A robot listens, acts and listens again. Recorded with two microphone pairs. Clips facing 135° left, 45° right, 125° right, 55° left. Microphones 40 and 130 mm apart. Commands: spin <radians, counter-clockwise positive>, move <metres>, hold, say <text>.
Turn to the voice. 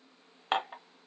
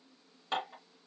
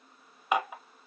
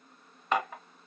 hold
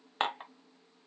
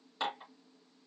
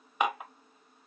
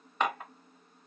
hold
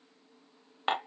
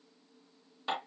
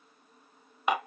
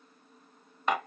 say I can't make out anyone speaking, only dishes clattering.